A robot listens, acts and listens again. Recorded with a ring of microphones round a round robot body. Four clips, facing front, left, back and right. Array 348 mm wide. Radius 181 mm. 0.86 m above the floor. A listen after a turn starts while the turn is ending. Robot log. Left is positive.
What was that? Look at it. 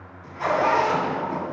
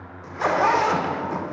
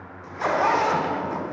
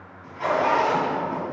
note: The zipper: 110° left.
cmd yaw +110
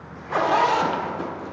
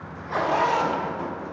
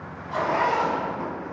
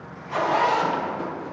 end: Found it: a zipper, straight ahead, under 1 m away.